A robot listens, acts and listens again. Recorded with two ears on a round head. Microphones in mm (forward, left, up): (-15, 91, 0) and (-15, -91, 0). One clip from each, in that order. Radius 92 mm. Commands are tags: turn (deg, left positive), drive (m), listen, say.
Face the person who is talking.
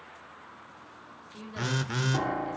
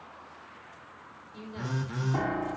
<turn deg="20"/>
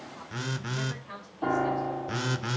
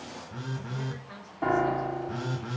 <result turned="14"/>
<turn deg="145"/>
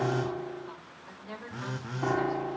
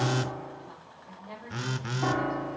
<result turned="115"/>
<turn deg="30"/>
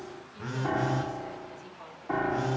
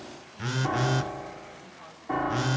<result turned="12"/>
<turn deg="15"/>
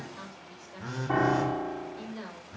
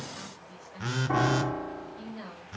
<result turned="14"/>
<say>Facing the woman speaking.</say>